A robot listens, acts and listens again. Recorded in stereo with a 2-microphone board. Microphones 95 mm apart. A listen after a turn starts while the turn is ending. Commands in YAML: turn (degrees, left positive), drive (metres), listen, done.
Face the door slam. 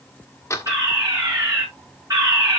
turn: 30
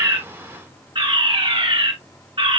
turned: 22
listen: true
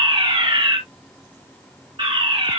done: "I heard a door slam, but can't make it out now. It was about 5° left or 130° left."